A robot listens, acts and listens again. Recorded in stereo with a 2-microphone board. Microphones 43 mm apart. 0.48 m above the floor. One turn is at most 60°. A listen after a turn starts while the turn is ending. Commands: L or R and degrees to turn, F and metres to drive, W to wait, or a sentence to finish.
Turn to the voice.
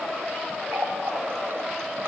W
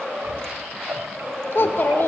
L60
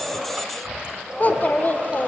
L45
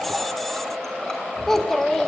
L10
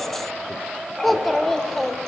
Facing the child speaking.